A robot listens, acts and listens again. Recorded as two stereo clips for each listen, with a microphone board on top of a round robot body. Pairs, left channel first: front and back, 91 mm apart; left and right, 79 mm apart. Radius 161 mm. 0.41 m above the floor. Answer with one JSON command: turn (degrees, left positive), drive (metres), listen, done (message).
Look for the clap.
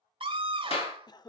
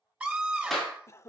{"done": "Found it: a clap, straight ahead."}